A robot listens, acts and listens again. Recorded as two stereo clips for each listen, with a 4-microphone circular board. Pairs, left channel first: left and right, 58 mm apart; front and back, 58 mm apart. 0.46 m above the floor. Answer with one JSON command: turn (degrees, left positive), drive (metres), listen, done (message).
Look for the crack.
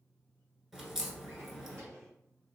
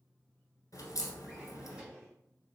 {"done": "Facing the crack, 1 to 2 m away."}